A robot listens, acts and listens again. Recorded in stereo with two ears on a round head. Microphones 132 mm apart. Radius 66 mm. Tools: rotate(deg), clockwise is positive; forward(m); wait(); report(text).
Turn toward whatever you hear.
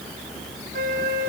rotate(65)
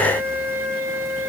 rotate(15)
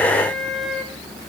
report("Facing the flute.")